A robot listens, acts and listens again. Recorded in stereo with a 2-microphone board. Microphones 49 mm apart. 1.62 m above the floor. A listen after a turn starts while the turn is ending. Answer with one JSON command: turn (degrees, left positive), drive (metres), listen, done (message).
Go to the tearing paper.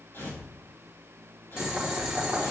{"turn": 50}
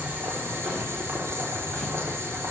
{"listen": true}
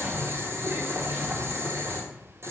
{"listen": true}
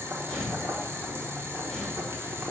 {"drive": 1.0}
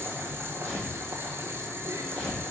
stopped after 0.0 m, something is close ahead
{"done": "Blocked. The tearing paper is further on, straight ahead."}